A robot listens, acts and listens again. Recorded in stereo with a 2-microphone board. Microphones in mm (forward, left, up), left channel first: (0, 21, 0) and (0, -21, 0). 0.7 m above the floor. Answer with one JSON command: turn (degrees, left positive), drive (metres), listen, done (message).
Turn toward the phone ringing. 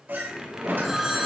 {"turn": -30}
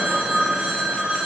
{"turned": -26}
{"turn": -150}
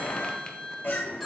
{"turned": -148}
{"listen": true}
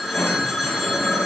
{"done": "Found it: a phone ringing, straight ahead."}